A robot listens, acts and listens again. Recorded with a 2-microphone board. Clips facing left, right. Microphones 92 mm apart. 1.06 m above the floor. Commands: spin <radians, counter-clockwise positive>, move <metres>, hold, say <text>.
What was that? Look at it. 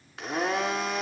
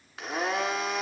spin 0.52
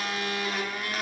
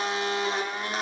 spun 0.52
spin -0.52
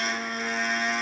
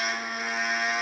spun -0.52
say Found it: a blender, straight ahead.